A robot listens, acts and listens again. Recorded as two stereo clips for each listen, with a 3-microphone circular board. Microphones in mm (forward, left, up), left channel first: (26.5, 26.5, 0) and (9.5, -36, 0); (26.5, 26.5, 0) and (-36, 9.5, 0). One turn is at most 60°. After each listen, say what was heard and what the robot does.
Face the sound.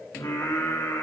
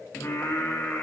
The singing: 75° left. Turn 60° left.
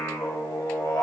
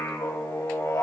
The singing is now 55° left. Turn 55° left.
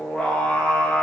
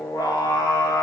The singing is now 10° left. Turn 10° left.
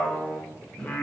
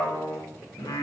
Found it: singing, straight ahead, 2 to 4 m away.